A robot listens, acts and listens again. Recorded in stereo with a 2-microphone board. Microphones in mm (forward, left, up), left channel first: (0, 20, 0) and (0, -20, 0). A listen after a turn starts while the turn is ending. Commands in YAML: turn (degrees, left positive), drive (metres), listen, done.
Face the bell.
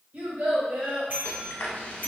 turn: -55
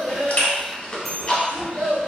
done: "Facing the bell, 1 to 2 m away."